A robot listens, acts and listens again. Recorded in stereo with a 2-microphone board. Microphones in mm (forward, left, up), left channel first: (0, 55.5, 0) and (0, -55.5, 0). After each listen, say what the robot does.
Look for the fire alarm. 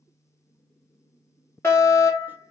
Turn 20° left.
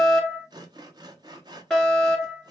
Found it: a fire alarm, straight ahead, 2 to 4 m away.